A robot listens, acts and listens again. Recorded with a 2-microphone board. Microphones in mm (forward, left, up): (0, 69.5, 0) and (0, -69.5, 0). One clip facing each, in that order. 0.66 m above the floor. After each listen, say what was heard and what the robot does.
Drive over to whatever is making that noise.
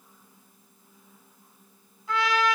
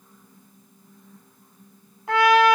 The trumpet: about 65° right or 115° right. Turn 65° right.
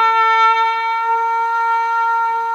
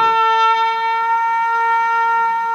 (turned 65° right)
Drive 1.0 m forward.
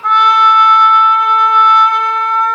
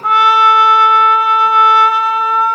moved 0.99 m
Drive 1.0 m forward.
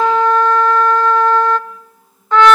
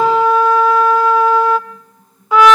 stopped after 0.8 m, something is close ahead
The trumpet is now 10° right. Turn 10° right.
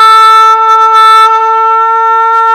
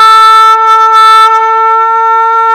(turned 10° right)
I am next to the trumpet.